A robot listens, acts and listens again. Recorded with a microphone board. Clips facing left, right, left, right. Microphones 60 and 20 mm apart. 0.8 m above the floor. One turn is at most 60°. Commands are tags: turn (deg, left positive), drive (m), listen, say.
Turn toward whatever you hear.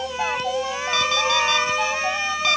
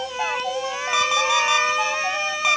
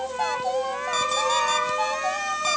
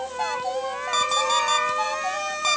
<turn deg="-15"/>
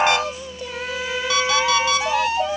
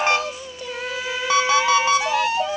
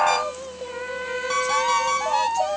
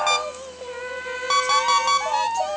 <turn deg="-60"/>
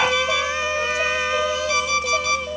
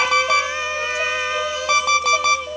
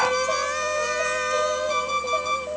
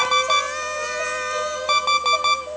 <turn deg="-60"/>
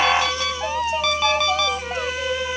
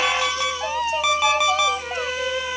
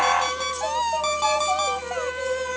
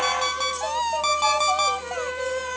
<turn deg="-10"/>
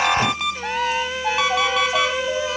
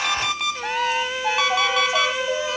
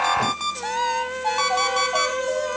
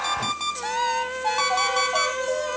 <say>Found it: an alarm clock, straight ahead, 2 to 4 m away.</say>